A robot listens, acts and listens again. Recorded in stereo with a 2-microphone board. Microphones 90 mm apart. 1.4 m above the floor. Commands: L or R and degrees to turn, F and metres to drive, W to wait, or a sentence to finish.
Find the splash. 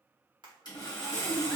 R60
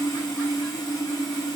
W
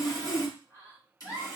I heard a splash, but can't make it out now. It was about straight ahead or 60° right.